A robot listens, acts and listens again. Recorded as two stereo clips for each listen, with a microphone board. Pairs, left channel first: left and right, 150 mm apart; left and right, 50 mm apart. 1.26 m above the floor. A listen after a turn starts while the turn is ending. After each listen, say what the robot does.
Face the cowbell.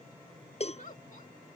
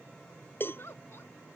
Turn 45° left.
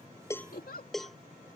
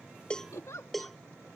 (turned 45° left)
Found it: a cowbell, straight ahead.